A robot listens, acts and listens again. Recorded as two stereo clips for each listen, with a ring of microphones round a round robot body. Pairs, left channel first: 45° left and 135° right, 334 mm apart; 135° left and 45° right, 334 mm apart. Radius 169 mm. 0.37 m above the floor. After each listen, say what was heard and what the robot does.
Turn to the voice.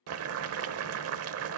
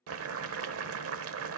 Keep listening.
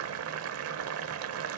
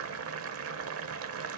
Keep listening.
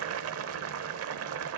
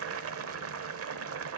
I can't make out anyone speaking to turn to.